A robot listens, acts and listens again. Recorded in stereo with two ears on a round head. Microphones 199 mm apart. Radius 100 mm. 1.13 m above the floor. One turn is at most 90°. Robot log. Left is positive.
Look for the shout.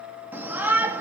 cmd yaw -30
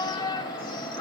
note: So it is at 20° left.
cmd yaw +20
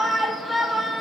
end: Facing the shout, 2 to 4 m away.